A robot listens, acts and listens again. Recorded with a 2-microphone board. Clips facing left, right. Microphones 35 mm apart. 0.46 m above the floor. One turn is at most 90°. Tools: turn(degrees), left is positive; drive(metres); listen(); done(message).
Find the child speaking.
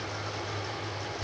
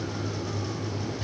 listen()
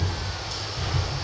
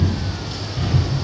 listen()
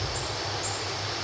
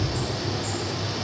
done("I can't make out a child speaking, only a bird.")